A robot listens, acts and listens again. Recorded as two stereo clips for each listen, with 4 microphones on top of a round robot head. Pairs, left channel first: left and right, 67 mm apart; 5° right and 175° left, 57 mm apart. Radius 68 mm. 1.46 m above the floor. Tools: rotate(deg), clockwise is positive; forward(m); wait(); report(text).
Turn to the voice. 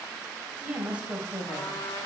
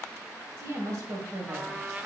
rotate(160)
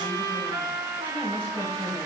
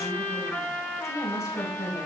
rotate(-20)
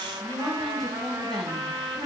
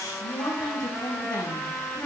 report("Facing the woman speaking.")